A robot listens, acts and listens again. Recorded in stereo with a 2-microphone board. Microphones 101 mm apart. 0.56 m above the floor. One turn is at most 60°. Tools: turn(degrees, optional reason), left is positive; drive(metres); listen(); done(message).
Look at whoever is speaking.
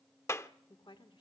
turn(degrees=55, reason="The woman speaking: about 55° left or 125° left.")
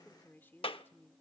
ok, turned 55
turn(degrees=25, reason="So it is at 25° left.")
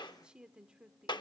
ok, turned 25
turn(degrees=-10, reason="The woman speaking is now 10° right.")
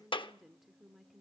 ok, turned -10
done("Facing the woman speaking.")